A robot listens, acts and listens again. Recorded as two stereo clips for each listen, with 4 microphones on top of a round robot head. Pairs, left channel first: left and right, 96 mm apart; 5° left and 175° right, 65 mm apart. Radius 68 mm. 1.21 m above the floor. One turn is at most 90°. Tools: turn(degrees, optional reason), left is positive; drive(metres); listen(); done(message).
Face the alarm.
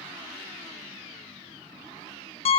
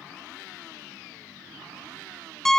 listen()
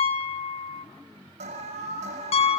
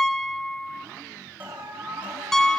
turn(degrees=-90, reason="The alarm: 100° right.")
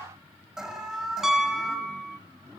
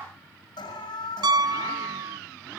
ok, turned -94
done("Facing the alarm.")